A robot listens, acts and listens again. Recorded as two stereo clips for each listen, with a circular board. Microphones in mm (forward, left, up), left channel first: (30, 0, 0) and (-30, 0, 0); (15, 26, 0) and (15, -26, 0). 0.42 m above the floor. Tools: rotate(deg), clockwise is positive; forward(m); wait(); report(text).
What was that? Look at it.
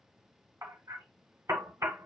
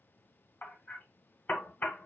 rotate(-145)
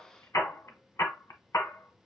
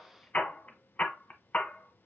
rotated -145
rotate(-25)
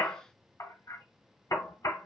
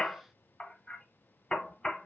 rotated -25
rotate(-15)
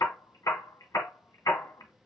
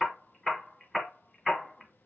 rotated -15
report("Found it: hammering, straight ahead.")